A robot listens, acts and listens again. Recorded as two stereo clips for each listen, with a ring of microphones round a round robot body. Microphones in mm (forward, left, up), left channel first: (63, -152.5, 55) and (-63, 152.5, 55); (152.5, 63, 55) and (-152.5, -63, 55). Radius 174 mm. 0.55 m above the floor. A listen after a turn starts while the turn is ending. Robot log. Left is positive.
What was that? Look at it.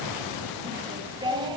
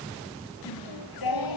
note: The singing: 35° left.
cmd yaw +35
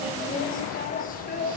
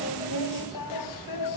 end: Found it: singing, straight ahead.